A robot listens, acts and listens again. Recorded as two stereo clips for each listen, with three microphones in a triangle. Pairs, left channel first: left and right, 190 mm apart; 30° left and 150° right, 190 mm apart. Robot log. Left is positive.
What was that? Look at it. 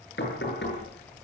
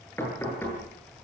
note: The knocking: 110° left.
cmd yaw +110
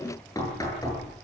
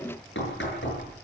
note: The knocking is now 20° left.
cmd yaw +20
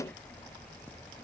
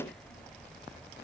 cmd idle
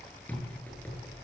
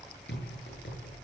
note: The knocking is now 10° left.
cmd yaw +10
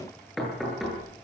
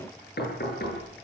end: Found it: knocking, straight ahead, over 4 m away.